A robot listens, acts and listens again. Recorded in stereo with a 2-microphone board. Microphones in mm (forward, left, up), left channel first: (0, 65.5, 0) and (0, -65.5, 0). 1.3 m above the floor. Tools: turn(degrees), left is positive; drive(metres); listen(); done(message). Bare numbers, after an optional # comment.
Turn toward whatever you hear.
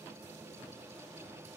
listen()
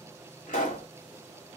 turn(90)
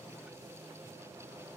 done("Facing where the pop came from. I can't hear it now.")